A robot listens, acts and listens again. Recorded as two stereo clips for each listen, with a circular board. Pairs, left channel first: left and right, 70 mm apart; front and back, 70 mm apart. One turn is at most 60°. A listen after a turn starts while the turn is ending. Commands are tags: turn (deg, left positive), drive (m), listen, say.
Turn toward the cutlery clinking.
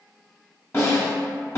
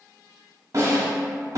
<listen/>
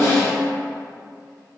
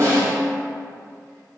<listen/>
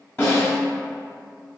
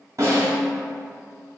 <say>I can't make out cutlery clinking to turn to.</say>